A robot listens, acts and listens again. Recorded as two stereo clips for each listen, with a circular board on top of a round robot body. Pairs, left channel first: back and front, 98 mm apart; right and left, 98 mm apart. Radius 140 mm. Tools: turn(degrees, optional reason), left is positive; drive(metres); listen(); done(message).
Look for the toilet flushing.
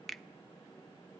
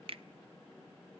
listen()
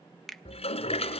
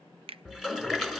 turn(degrees=175, reason="The toilet flushing: 175° left.")
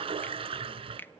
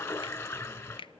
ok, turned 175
turn(degrees=-30, reason="The toilet flushing is now 30° right.")
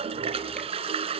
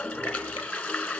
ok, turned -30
turn(degrees=-15, reason="The toilet flushing is now 15° right.")
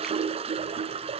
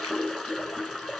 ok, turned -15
done("Facing the toilet flushing, 1 to 2 m away.")